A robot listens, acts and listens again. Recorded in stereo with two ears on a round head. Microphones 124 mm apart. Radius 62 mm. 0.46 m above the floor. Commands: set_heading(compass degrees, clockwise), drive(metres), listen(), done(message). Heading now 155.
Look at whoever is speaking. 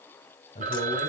set_heading(110)
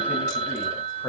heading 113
set_heading(98)
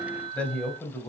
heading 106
set_heading(91)
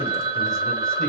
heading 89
listen()
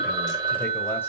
listen()
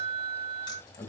set_heading(64)
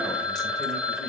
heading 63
listen()
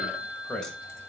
done("Found it: a man speaking, straight ahead.")